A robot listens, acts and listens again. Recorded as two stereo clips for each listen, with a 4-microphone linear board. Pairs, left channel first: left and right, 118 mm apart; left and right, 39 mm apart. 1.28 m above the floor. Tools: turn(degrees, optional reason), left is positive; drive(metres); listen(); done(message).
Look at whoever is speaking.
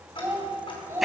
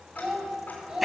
turn(degrees=-20, reason="The child speaking: about 20° right or 160° right.")
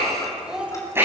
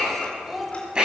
turn(degrees=-30)
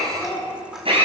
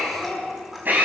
turn(degrees=20, reason="So it is at 20° left.")
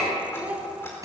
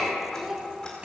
turn(degrees=-10, reason="The child speaking is now 10° right.")
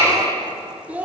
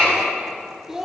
turn(degrees=-15, reason="The child speaking is now 15° right.")
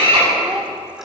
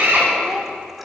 listen()
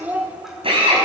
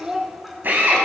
turn(degrees=-15, reason="The child speaking is now 15° right.")
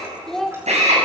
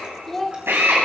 done("Found it: a child speaking, straight ahead.")